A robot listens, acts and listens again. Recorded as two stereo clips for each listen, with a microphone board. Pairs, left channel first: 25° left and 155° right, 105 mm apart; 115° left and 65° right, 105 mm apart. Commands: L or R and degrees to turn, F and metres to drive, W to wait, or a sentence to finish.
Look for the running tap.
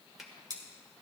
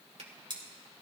W
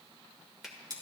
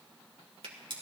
W
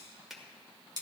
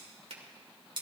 I can't make out a running tap to turn to.